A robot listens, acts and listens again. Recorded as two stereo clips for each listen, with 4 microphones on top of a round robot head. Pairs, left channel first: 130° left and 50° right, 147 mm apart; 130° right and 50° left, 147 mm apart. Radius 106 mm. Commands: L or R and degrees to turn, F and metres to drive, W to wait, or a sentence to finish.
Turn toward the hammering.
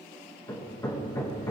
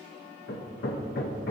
R160
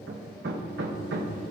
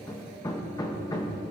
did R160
R65
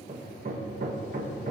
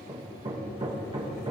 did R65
R10
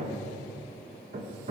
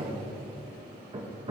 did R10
Found it: hammering, straight ahead.